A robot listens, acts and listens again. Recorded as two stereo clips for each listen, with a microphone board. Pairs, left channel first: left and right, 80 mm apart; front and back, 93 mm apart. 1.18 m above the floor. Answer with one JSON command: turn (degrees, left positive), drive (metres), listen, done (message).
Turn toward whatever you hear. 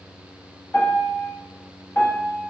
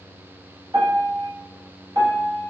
{"turn": 155}
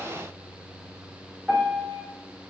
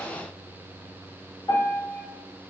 {"turn": -10}
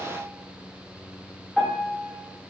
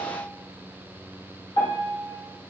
{"done": "Facing the piano, under 1 m away."}